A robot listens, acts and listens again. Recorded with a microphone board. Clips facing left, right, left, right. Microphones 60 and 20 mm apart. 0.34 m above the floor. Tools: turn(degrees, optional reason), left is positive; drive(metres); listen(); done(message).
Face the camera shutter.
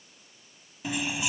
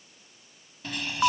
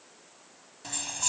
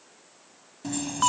listen()
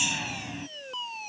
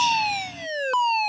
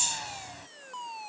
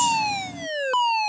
listen()
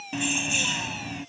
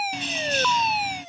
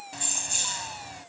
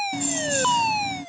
done("I can't make out a camera shutter to turn to.")